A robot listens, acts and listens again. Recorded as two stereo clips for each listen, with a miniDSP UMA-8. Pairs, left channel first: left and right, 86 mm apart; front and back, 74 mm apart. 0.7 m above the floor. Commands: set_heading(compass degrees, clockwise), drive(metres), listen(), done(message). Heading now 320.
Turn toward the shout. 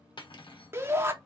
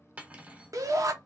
set_heading(105)
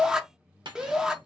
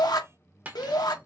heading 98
set_heading(108)
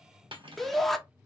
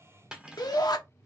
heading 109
done("Facing the shout, under 1 m away.")